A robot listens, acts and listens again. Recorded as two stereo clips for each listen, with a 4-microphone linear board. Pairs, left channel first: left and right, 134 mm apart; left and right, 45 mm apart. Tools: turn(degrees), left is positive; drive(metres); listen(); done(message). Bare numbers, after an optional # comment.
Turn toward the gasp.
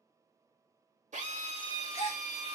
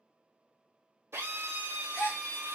# The gasp: about 50° left or 130° left.
turn(50)
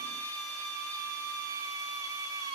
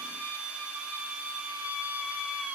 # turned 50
listen()
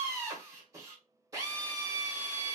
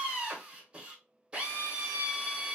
done("I heard a gasp, but can't make it out now. It was about straight ahead or 80° left.")